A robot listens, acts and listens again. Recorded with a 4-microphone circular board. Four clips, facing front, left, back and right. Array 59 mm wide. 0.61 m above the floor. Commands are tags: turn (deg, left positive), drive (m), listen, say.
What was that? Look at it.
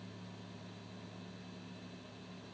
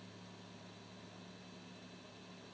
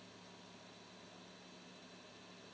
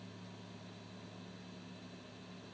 <listen/>
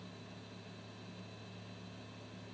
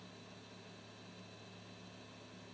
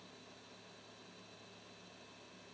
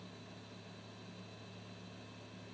<listen/>
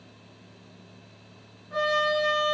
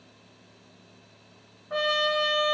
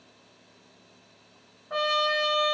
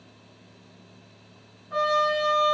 <turn deg="140"/>
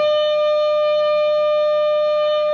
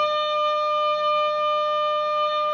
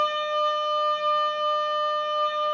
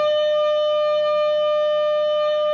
<turn deg="15"/>
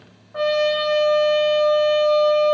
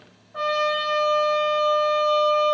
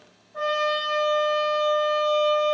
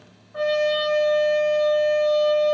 <say>Facing the trumpet, under 1 m away.</say>